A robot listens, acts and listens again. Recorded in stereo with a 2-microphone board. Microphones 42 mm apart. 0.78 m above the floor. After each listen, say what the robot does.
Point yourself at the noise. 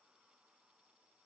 Keep listening.
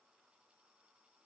Keep listening.
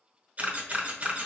Turn 35° right.
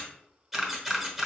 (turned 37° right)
Found it: a camera shutter, straight ahead, under 1 m away.